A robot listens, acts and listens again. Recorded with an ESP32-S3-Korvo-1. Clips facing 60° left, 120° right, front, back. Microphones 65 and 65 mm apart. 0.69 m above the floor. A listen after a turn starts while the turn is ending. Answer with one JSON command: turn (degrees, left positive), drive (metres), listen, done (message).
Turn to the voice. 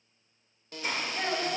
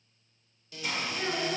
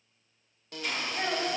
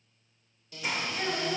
{"turn": 50}
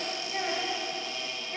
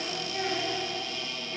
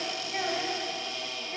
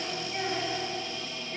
{"done": "Facing the child speaking, 1 to 2 m away."}